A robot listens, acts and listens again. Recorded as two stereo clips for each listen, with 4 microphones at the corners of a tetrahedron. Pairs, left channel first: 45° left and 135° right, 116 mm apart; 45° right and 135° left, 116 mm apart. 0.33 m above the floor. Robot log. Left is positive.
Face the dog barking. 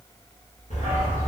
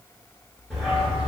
note: The dog barking: 45° left.
cmd yaw +45
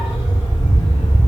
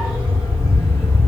note: The dog barking is now 20° left.
cmd yaw +20
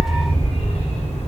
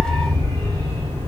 note: The dog barking is now 20° left.
cmd yaw +20
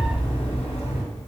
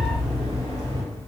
note: The dog barking is now 20° left.
cmd yaw +20
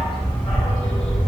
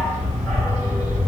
note: The dog barking is now 15° left.
cmd yaw +15
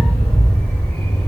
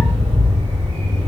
end: Facing the dog barking.